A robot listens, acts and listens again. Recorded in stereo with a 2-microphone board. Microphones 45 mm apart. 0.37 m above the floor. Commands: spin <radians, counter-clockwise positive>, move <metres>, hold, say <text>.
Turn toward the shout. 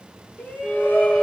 spin 0.52
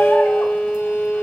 hold
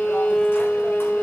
hold
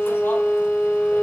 say I heard a shout, but can't make it out now. It was about straight ahead or 120° left.